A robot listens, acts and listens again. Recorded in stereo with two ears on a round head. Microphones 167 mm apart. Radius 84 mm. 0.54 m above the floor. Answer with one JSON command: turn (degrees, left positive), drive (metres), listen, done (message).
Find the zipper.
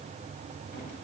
{"listen": true}
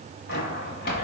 {"turn": 60}
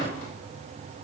{"listen": true}
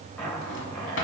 {"done": "Facing the zipper."}